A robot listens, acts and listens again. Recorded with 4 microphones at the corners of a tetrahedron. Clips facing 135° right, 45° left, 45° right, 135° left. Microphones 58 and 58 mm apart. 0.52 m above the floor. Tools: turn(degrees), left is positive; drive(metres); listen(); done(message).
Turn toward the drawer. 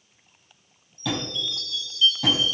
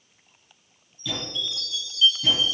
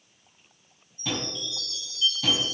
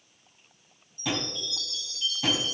turn(degrees=-155)
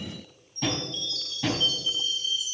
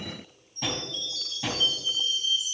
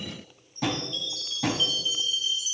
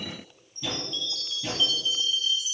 turn(degrees=-45)
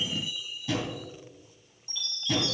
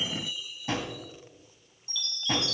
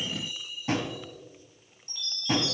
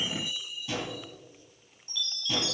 done("Found it: a drawer, straight ahead, 1 to 2 m away.")